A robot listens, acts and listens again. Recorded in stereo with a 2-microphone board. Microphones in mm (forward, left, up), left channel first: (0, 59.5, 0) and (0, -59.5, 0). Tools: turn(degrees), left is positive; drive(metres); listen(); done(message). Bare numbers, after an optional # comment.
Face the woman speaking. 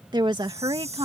# The woman speaking: about 45° right or 135° right.
turn(-45)
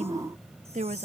# So it is at 95° right.
turn(-95)
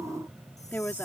# The woman speaking is now 15° left.
turn(15)
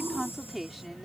done("Found it: a woman speaking, straight ahead.")